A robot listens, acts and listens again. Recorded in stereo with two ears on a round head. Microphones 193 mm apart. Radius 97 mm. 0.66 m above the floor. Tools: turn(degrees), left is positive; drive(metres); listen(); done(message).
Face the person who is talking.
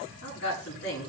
turn(degrees=55)
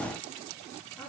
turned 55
listen()
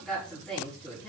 done("Facing the woman speaking.")